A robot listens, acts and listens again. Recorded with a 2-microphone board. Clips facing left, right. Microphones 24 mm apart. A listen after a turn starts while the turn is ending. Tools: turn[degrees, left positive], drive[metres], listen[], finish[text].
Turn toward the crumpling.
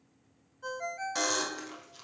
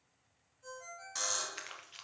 Action: turn[-90]
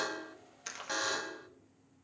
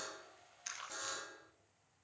Thought: So it is at 10° left.
Action: turn[10]
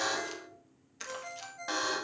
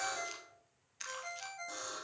Action: finish[Facing the crumpling, 1 to 2 m away.]